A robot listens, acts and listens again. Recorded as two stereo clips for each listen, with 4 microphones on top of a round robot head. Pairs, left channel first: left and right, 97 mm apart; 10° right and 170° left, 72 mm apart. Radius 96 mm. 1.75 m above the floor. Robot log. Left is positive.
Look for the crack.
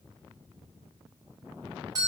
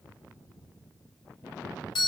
cmd idle
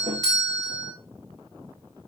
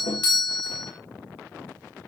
cmd idle
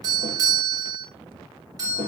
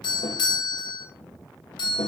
end: I can't make out a crack to turn to.